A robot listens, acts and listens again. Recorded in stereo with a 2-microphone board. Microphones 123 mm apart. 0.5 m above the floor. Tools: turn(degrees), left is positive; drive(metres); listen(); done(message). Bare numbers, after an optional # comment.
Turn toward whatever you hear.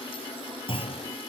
# The clunk: about 45° left or 135° left.
turn(45)
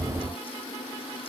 listen()
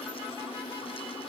done("I heard a clunk, but can't make it out now. It was about straight ahead or 90° left.")